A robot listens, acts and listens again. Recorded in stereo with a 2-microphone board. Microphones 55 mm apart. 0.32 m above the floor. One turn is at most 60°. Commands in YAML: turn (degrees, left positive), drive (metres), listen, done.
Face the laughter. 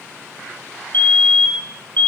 listen: true
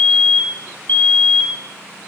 listen: true
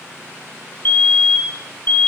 done: "I can't make out laughter, only a fire alarm."